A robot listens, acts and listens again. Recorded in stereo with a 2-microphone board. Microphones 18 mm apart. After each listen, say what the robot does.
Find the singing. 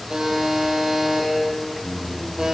Turn 30° left.
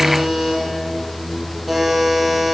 Turn 150° left.
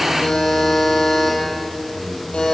Turn 40° left.
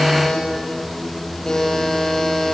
Facing the singing, over 4 m away.